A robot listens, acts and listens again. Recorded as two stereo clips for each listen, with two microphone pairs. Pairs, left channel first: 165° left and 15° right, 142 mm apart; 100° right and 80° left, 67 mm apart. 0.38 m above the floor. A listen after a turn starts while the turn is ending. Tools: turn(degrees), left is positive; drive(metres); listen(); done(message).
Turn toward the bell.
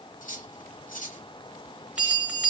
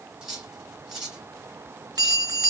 turn(degrees=65)
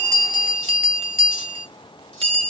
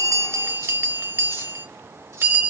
turn(degrees=25)
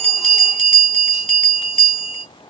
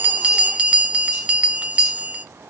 turn(degrees=10)
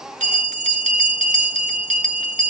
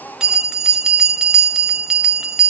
done("Facing the bell.")